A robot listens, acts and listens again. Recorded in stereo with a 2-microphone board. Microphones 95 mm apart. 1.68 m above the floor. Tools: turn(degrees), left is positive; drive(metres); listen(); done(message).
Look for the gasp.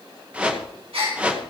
turn(degrees=-90)
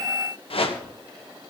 done("Facing where the gasp came from. I can't hear it now.")